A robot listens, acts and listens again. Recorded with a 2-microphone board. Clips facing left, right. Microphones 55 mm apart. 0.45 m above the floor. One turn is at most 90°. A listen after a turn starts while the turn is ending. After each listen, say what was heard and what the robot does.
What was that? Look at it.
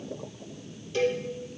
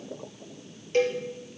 The cowbell: about 50° right or 130° right. Turn 50° right.
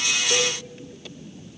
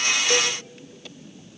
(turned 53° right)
Keep listening.
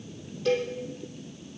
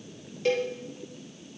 So it is at 75° right. Turn 75° right.
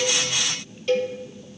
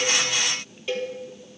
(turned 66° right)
The cowbell is now 10° right. Turn 10° right.
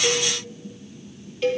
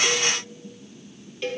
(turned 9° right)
Found it: a cowbell, straight ahead, 2 to 4 m away.